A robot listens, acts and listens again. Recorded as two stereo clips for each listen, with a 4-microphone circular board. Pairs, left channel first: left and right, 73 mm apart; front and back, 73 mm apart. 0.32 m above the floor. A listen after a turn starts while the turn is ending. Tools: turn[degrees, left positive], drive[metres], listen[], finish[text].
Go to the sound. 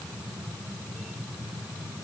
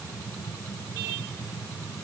Action: listen[]
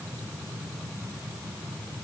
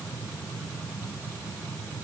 Action: listen[]
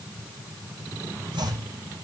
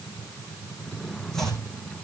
Thought: The chopping: 85° right.
Action: turn[-85]
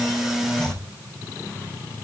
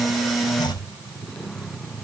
Thought: The chopping is now 10° left.
Action: turn[10]
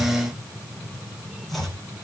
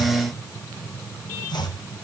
Action: drive[1.0]
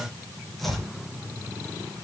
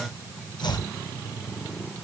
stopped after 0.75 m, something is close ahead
Action: finish[Blocked. The chopping is further on, straight ahead.]